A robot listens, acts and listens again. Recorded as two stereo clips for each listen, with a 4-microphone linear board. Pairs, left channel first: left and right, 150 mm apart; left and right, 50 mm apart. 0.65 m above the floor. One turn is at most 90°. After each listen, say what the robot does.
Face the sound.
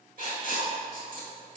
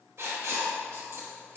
Turn 60° right.
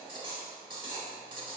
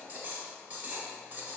Turn 35° right.
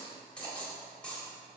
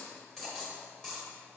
Turn 10° left.
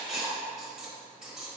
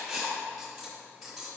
Found it: writing, straight ahead, 1 to 2 m away.